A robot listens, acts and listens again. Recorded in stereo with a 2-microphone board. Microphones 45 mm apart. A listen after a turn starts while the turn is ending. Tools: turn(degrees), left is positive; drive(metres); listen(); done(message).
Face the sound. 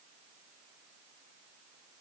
listen()
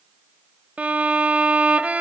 turn(degrees=-35)
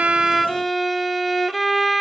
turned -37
done("Facing the violin.")